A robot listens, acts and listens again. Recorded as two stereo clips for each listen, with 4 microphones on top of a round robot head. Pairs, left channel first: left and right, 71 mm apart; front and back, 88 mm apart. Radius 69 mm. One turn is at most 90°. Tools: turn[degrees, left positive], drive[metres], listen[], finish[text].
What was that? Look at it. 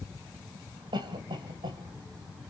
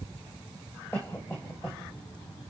Thought: The cough: 70° right.
Action: turn[-70]
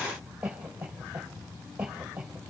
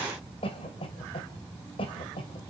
Thought: The cough is now 10° right.
Action: turn[-10]
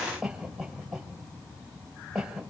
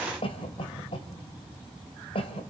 Action: finish[Facing the cough.]